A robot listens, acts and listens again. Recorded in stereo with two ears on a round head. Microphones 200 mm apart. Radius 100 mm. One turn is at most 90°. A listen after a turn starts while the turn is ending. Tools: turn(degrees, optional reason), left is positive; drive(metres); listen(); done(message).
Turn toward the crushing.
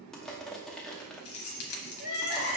turn(degrees=30)
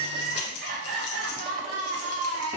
listen()
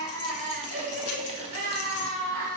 listen()
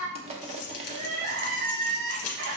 turn(degrees=-30, reason="So it is at 30° right.")
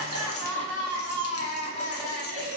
listen()
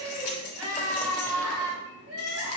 listen()
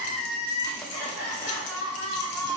done("I heard crushing from this way, but can't make it out now.")